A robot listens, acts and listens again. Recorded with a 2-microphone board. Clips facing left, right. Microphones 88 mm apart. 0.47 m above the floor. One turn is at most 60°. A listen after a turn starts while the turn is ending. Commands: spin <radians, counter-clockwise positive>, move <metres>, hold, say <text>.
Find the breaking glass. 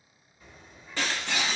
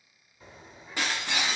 spin -0.52
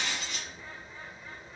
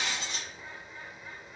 hold
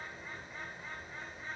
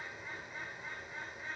say I heard breaking glass, but can't make it out now. It was about 15° left or 135° right.